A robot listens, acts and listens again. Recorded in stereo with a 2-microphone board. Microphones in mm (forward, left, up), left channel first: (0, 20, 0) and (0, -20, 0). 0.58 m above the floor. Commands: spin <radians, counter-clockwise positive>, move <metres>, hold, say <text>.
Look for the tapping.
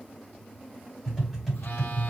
spin 0.52
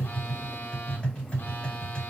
spin 2.53
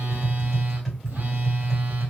say Facing the tapping.